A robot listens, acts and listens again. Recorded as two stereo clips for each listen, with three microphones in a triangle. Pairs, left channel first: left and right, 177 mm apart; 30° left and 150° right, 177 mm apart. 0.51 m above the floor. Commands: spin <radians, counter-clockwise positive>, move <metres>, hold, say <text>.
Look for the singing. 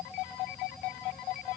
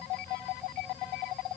hold
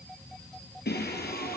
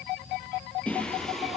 spin 2.09
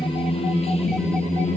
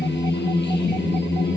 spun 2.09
spin 0.70
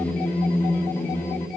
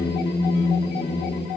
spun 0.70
spin 0.26
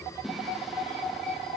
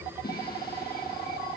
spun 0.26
say Found it: singing, straight ahead, 2 to 4 m away.